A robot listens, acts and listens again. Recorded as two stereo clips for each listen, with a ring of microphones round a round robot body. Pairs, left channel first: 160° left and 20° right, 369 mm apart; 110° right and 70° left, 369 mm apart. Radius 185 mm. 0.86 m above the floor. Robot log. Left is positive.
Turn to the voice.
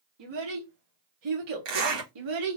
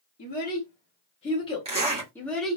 note: The child speaking: 20° right.
cmd yaw -20
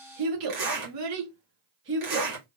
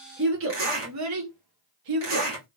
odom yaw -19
note: The child speaking is now 40° left.
cmd yaw +40
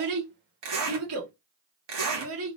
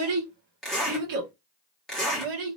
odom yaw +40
note: The child speaking is now 35° left.
cmd yaw +35
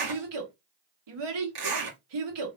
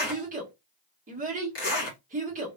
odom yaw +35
end: Facing the child speaking, 1 to 2 m away.